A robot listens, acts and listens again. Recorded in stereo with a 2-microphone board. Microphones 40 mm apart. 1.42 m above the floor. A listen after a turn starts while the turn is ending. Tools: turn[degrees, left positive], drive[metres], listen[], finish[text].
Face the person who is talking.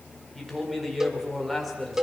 Action: turn[30]
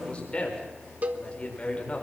Thought: So it is at 150° left.
Action: turn[150]
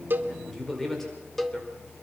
Action: finish[Found it: a man speaking, straight ahead.]